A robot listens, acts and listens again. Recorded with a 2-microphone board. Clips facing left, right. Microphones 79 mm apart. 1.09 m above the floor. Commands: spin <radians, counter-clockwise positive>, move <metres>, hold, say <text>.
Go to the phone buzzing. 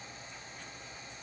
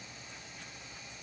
hold
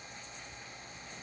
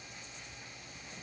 hold
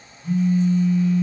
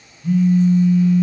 spin -1.57
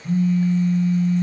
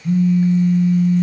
move 1.0
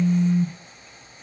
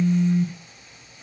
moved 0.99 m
move 1.0
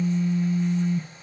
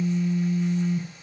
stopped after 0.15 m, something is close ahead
say Arrived at the phone buzzing, straight ahead.